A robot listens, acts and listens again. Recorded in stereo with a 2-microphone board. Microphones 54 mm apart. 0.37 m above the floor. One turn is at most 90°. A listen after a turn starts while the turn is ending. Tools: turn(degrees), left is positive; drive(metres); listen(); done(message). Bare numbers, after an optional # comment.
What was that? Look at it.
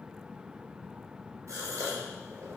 # The gasp: about 65° right or 115° right.
turn(-65)
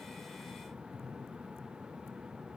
listen()
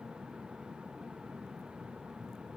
done("I heard a gasp, but can't make it out now. It was about straight ahead or 50° right.")